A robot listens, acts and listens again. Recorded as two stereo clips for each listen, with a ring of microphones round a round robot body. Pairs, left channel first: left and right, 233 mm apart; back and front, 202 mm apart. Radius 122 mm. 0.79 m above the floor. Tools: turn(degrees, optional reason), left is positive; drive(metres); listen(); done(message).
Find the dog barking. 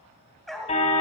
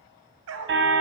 done("Facing the dog barking, 1 to 2 m away.")